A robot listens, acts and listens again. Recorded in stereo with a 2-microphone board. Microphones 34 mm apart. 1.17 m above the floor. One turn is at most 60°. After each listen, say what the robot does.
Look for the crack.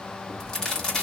Turn 20° left.
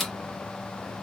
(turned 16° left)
Facing the crack, 1 to 2 m away.